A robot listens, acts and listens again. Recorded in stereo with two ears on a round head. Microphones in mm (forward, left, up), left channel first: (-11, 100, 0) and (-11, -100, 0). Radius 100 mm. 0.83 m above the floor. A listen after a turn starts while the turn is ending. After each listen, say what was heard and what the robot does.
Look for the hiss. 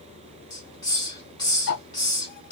The hiss: about 20° left or 160° left. Turn 20° left.
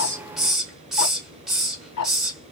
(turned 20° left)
Facing the hiss, 1 to 2 m away.